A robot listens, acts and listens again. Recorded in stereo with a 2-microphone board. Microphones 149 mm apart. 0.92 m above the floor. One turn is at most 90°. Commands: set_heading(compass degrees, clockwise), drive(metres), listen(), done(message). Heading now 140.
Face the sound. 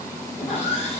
set_heading(95)
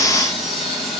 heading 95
done("Found it: sawing, straight ahead.")